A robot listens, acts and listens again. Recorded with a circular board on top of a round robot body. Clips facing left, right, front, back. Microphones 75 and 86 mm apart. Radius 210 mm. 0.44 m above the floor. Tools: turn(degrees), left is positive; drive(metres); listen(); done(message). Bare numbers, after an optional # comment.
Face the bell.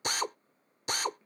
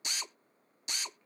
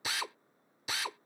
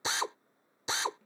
listen()
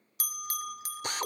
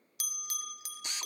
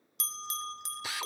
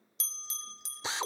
# The bell: 40° left.
turn(40)
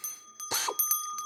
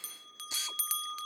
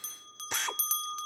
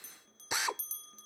# The bell is now 15° left.
turn(15)
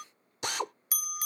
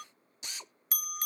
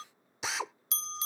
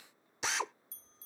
done("Found it: a bell, straight ahead.")